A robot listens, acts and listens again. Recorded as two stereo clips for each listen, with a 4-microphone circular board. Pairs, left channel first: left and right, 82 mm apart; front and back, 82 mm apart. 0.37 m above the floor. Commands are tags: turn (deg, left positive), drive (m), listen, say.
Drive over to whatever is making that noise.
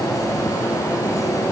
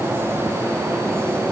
<listen/>
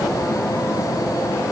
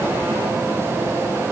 <listen/>
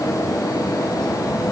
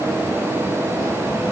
<say>I can't make out anything to turn to.</say>